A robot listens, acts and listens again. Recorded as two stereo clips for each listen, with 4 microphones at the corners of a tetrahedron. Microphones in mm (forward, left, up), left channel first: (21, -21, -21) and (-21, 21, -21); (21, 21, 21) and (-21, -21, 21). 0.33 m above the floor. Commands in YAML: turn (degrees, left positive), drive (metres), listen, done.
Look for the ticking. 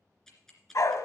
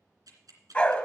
turn: -125
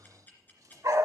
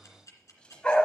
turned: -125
turn: 15
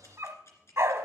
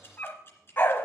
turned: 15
done: "Found it: ticking, straight ahead, 2 to 4 m away."